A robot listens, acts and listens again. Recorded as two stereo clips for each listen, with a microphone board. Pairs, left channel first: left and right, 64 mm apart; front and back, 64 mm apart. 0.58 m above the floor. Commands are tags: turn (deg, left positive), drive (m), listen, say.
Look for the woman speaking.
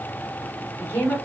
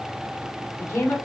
<turn deg="30"/>
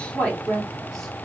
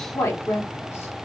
<turn deg="15"/>
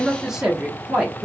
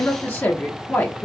<turn deg="-25"/>
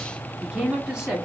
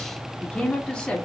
<turn deg="-50"/>
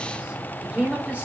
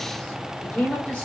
<turn deg="-50"/>
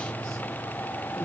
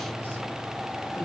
<listen/>
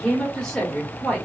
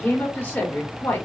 <turn deg="25"/>
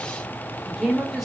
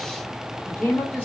<say>Found it: a woman speaking, straight ahead.</say>